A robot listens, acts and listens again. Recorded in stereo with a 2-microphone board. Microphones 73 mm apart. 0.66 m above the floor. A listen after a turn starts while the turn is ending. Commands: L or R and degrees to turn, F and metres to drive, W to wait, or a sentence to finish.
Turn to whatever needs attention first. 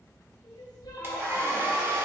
L90
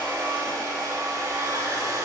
W
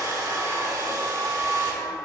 W
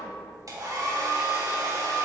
I heard crying from this way, but can't make it out now.